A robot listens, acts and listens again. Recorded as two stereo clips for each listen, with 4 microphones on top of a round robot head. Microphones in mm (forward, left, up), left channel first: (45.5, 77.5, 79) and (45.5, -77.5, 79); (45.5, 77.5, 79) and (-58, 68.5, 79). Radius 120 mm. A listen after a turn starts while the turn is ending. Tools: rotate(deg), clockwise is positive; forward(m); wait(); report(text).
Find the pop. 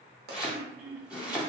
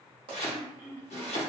rotate(120)
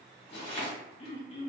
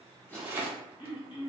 report("I heard a pop from this way, but can't make it out now.")